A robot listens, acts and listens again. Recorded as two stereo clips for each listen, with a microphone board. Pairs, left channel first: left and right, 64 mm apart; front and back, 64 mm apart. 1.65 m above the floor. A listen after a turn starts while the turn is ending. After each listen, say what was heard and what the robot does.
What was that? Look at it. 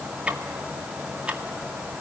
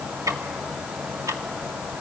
The ticking: 160° right. Turn 160° right.
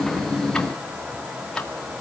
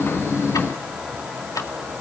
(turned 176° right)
The ticking is now 15° left. Turn 15° left.
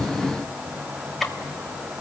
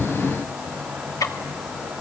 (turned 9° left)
Facing the ticking, 2 to 4 m away.